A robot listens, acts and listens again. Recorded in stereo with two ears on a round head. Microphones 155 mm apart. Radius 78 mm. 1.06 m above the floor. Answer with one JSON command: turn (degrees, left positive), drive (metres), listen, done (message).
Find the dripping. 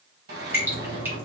{"turn": -30}
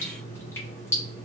{"turn": 15}
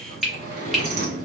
{"done": "Found it: dripping, straight ahead."}